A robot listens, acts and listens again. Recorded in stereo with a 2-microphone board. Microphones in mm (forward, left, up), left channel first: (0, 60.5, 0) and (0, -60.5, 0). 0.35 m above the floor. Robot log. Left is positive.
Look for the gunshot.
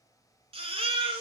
cmd idle
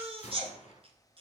note: The gunshot: about 65° left or 115° left.
cmd yaw +65
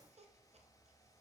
cmd idle
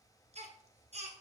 end: I heard a gunshot, but can't make it out now. It was about straight ahead or 50° left.